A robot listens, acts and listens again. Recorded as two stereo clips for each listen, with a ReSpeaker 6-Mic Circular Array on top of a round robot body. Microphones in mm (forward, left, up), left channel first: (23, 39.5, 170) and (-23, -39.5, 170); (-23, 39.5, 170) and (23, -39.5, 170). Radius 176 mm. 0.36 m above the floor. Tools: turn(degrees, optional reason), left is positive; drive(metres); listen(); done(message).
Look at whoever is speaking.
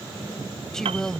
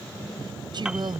turn(degrees=-25, reason="The woman speaking: 25° right.")
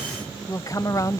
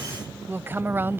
done("Found it: a woman speaking, straight ahead.")